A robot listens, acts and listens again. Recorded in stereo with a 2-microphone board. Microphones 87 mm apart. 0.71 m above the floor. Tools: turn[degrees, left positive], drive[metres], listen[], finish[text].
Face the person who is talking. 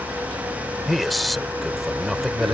Action: turn[30]
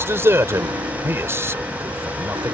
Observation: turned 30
Thought: So it is at 30° right.
Action: turn[-30]
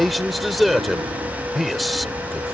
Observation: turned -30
Action: finish[Facing the man speaking.]